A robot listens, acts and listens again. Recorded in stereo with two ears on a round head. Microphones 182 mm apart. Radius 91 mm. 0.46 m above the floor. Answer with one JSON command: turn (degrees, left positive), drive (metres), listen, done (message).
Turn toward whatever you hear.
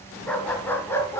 {"turn": 30}
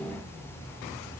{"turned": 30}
{"listen": true}
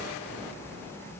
{"listen": true}
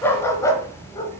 {"turn": 20}
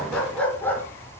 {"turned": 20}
{"turn": 30}
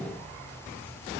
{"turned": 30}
{"listen": true}
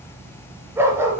{"turn": -10}
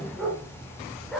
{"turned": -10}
{"done": "Found it: a dog barking, straight ahead, 2 to 4 m away."}